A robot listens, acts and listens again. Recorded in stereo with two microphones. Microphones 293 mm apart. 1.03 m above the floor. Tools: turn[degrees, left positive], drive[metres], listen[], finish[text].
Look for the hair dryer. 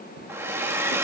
Action: turn[-30]
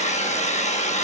Thought: So it is at 25° left.
Action: turn[25]
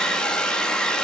Action: finish[Facing the hair dryer.]